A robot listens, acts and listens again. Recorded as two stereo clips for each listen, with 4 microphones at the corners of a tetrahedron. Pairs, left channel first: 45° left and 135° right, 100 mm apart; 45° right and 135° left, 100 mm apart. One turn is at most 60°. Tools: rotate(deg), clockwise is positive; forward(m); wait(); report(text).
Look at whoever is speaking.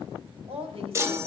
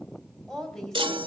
rotate(60)
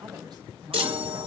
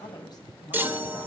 rotate(60)
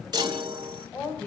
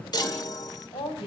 rotate(25)
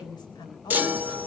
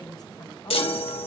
report("Found it: a woman speaking, straight ahead.")